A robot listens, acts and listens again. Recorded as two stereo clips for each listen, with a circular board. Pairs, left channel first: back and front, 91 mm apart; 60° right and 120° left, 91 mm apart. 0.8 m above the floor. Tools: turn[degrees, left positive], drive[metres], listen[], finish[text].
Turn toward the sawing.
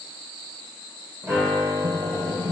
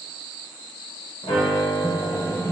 Thought: The sawing: 10° right.
Action: turn[-10]
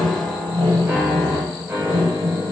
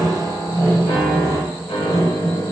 Action: finish[Found it: sawing, straight ahead.]